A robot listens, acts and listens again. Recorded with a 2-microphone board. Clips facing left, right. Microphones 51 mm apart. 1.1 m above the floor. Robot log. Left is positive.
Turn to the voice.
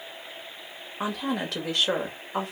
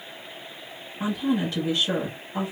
note: The woman speaking: about 75° left or 105° left.
cmd yaw +75
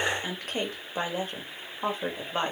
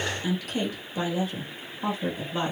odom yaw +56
note: So it is at 45° left.
cmd yaw +45
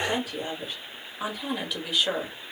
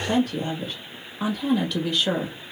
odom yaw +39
end: Facing the woman speaking, 1 to 2 m away.